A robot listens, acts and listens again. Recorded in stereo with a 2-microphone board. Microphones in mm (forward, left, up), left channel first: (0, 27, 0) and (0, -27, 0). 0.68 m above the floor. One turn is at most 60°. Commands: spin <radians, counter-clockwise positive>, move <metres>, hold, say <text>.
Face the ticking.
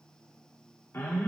hold
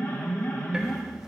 spin -0.52
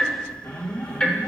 spin 0.26
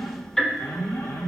say Facing the ticking, under 1 m away.